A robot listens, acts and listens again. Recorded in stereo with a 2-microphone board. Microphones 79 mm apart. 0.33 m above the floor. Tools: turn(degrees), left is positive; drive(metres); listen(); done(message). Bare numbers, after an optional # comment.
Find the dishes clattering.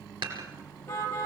turn(-90)
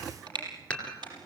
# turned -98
# So it is at 15° left.
turn(15)
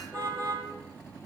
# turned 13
listen()
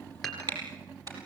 done("Facing the dishes clattering.")